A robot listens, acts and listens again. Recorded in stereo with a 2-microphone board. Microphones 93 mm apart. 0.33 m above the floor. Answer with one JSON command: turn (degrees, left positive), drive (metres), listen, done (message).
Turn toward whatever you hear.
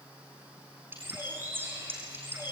{"turn": -20}
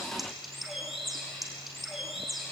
{"done": "Facing the bird, over 4 m away."}